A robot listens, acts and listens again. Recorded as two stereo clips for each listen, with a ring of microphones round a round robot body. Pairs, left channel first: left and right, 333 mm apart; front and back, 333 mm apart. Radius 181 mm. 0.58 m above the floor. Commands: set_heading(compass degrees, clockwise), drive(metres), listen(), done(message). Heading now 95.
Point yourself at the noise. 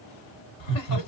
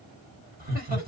set_heading(335)
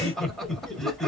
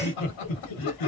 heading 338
done("Found it: laughter, straight ahead.")